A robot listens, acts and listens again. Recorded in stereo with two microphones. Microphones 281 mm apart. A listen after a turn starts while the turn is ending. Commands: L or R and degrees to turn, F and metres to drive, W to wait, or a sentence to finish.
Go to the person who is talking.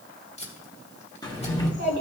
L75
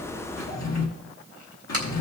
L25
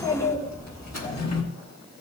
L15
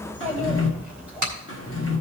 F1.0
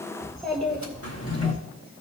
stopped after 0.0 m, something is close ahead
Something is in my way. I am facing the child speaking but have not reached it.